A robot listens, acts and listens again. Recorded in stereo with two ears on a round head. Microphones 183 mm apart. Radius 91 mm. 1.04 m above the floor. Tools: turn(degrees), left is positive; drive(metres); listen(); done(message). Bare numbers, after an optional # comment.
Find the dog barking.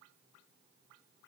listen()
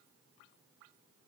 listen()
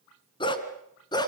# The dog barking: about 20° left or 160° left.
turn(20)
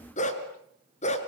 # The dog barking: about 35° left or 145° left.
turn(35)
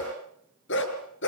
# So it is at 115° left.
turn(115)
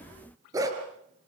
# The dog barking is now 15° right.
turn(-15)
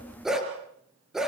done("Found it: a dog barking, straight ahead.")